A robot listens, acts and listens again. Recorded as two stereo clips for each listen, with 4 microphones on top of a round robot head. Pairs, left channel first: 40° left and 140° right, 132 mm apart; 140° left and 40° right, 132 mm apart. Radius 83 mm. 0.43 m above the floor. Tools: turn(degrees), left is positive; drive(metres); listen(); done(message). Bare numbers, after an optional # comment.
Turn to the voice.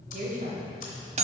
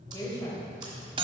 # The woman speaking: 160° right.
turn(-160)
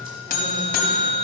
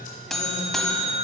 listen()
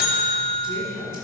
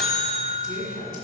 # The woman speaking is now 25° right.
turn(-25)
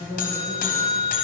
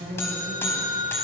# The woman speaking is now 15° right.
turn(-15)
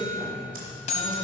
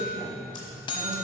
listen()
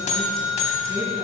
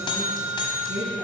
listen()
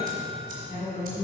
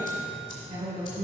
done("Facing the woman speaking, over 4 m away.")